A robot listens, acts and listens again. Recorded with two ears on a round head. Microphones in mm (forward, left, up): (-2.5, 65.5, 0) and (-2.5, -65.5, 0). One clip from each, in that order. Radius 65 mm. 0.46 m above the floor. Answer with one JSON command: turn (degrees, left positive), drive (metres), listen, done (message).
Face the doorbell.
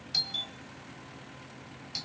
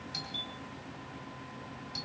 {"turn": 45}
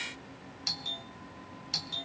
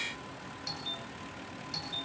{"turn": 80}
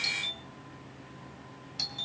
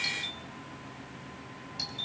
{"turn": 25}
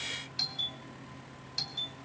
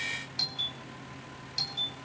{"done": "Found it: a doorbell, straight ahead, 2 to 4 m away."}